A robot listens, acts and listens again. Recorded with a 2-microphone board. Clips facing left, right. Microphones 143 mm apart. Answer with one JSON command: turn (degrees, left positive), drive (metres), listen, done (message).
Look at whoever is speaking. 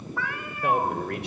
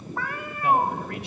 {"turn": 65}
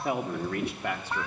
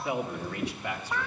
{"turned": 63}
{"turn": 55}
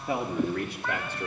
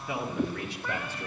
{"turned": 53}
{"turn": 60}
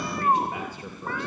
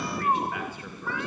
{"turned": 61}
{"turn": 25}
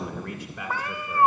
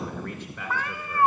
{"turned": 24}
{"done": "Found it: a man speaking, straight ahead, 2 to 4 m away."}